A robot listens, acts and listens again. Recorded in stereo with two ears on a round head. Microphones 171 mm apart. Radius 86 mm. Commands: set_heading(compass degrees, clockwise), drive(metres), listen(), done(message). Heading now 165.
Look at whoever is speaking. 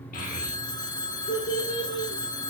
set_heading(100)
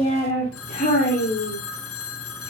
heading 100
set_heading(55)
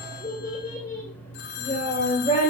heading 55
set_heading(25)
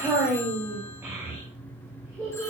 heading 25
set_heading(40)
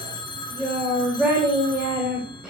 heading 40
done("Facing the child speaking, 2 to 4 m away.")